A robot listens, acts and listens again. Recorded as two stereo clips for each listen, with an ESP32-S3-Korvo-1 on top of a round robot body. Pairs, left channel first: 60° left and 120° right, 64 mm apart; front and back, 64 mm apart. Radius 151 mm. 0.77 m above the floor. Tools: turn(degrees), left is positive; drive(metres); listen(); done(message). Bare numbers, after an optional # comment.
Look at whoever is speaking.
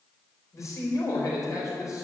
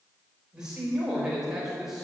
# The man speaking: 95° left.
turn(95)
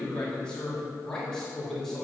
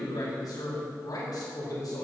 # The man speaking is now 25° right.
turn(-25)
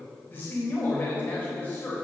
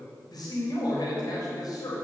done("Found it: a man speaking, straight ahead, 2 to 4 m away.")